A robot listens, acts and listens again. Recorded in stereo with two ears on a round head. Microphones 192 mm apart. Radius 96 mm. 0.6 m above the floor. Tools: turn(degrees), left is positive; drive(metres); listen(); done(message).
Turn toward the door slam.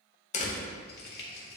turn(degrees=30)
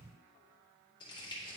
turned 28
listen()
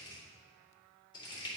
done("I heard a door slam, but can't make it out now. It was about 5° left or 120° left.")